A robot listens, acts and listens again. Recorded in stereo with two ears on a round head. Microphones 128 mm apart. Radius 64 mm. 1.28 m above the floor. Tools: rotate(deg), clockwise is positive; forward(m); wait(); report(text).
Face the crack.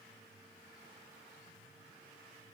wait()
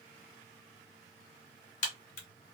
rotate(-55)
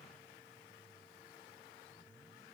wait()
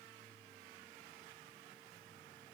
report("I heard a crack, but can't make it out now. It was about straight ahead or 70° left.")